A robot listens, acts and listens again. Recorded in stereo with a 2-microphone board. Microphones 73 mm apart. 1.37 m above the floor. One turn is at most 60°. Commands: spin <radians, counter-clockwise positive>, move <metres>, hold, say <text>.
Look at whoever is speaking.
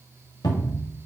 hold
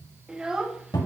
spin -0.52
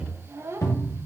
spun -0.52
spin -1.05
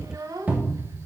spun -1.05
spin -1.05
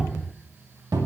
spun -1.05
hold
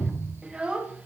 spin -0.26
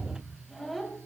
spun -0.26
say Found it: a child speaking, straight ahead.